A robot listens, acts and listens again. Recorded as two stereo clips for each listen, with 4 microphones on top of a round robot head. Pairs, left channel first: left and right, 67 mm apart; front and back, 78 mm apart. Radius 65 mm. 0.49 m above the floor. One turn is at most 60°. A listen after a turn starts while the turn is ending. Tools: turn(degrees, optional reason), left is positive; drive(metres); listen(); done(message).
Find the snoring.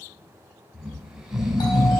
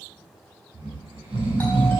turn(degrees=-60, reason="The snoring: 175° right.")
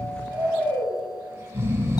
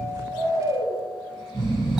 turn(degrees=-60, reason="The snoring is now 140° right.")
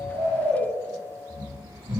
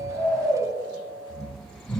turn(degrees=-60, reason="The snoring is now 85° right.")
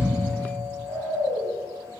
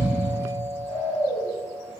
turn(degrees=-40, reason="The snoring is now 40° right.")
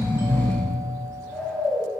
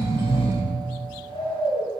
done("Facing the snoring.")